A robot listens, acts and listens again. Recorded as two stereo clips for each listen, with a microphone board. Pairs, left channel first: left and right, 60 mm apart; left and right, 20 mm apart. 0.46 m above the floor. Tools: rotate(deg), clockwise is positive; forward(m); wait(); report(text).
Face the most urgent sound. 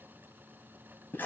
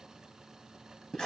wait()
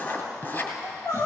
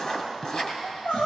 rotate(-90)
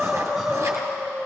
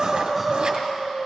report("Found it: crying, straight ahead.")